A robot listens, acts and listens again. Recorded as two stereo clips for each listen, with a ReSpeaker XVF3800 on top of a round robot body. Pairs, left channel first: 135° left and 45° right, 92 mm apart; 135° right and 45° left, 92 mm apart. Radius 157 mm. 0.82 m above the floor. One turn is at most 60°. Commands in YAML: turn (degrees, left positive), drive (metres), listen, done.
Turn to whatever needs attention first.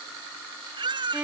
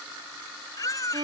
turn: -60
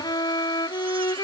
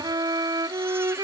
turn: -20
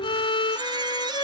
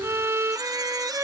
listen: true
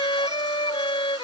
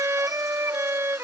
done: "I heard a baby crying from this way, but can't make it out now."